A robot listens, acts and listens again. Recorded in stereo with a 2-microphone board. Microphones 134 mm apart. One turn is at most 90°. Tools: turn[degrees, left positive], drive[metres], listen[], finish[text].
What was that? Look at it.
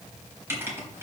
Thought: The writing: about 20° right or 160° right.
Action: turn[-20]
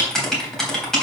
Action: finish[Facing the writing, 2 to 4 m away.]